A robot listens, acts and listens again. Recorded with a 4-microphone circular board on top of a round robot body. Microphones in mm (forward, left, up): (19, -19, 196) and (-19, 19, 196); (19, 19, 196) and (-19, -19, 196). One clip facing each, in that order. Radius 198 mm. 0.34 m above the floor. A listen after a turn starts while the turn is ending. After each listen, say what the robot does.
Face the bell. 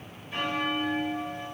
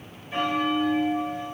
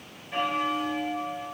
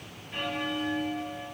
Turn 80° left.
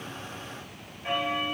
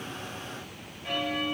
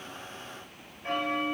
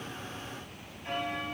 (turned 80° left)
Turn 10° left.
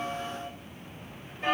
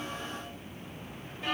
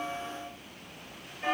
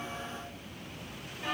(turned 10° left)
Facing the bell.